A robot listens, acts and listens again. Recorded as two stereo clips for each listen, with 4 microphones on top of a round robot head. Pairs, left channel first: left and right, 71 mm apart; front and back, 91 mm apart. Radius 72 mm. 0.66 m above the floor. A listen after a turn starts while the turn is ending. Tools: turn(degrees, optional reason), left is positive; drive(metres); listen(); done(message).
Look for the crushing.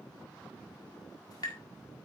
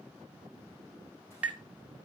listen()
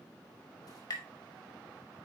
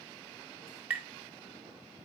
listen()
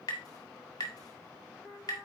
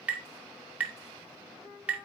done("I can't make out crushing, only tapping.")